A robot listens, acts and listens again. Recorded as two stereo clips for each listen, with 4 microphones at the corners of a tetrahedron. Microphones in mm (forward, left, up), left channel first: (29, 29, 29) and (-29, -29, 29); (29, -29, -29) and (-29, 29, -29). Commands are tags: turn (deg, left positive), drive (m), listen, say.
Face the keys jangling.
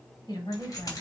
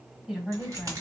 <turn deg="90"/>
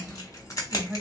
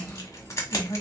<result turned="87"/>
<say>Found it: keys jangling, straight ahead, 1 to 2 m away.</say>